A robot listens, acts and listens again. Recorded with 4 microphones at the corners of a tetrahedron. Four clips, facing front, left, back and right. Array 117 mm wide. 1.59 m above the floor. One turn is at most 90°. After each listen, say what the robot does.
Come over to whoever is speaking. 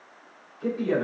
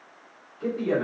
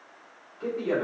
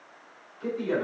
Turn 90° left.
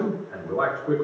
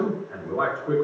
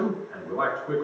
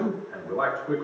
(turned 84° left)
Turn 55° left.
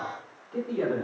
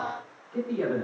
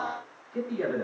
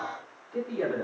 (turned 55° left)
Drive 1.0 m forward.
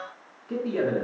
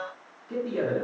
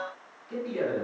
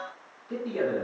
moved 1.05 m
Drive 1.0 m forward.
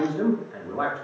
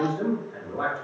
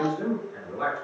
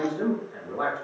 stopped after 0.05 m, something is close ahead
Turn 10° right.
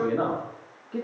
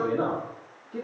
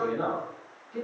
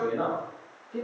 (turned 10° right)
Arrived at the man speaking, straight ahead.